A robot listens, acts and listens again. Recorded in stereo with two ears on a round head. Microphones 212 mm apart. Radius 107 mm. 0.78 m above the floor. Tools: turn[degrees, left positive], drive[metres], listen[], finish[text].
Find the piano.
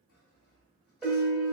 Action: turn[-30]
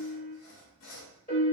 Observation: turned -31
Thought: So it is at 25° left.
Action: turn[25]
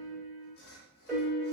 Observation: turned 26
Action: finish[Found it: a piano, straight ahead.]